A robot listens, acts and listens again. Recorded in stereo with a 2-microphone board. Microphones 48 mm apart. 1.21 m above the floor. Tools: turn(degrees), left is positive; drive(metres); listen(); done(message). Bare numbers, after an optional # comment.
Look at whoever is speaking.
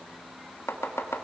listen()
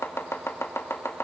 listen()
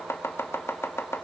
done("I can't make out anyone speaking to turn to.")